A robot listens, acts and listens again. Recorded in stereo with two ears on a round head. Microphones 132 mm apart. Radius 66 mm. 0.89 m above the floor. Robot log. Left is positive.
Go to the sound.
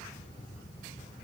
cmd idle
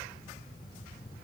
cmd idle
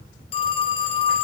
note: The phone ringing: about 40° left or 140° left.
cmd yaw +40
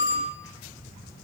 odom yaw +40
note: So it is at 100° left.
cmd yaw +100
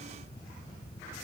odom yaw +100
cmd idle
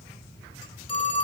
note: The phone ringing is now 35° left.
cmd yaw +35
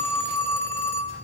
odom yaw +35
note: The phone ringing is now 15° left.
cmd yaw +15
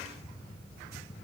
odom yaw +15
cmd idle
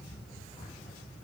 cmd idle
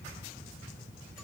end: I heard a phone ringing from this way, but can't make it out now. I did not reach it.